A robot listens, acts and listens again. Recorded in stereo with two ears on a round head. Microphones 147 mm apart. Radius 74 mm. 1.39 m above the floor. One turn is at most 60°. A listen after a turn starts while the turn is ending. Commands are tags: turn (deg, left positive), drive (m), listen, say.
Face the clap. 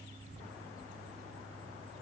<listen/>
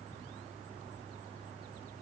<listen/>
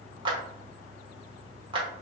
<turn deg="-30"/>
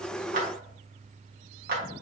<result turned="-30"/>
<turn deg="-60"/>
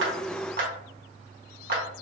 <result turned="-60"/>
<turn deg="-60"/>
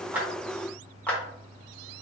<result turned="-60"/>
<turn deg="10"/>
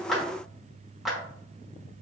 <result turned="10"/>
<say>Facing the clap.</say>